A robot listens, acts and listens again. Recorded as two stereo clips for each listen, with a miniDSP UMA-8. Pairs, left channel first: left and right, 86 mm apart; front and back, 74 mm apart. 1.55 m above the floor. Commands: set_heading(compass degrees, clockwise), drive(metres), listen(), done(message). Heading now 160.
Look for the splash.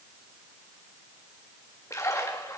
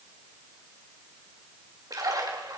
set_heading(15)
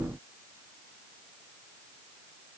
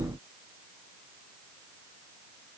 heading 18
done("Facing where the splash came from. I can't hear it now.")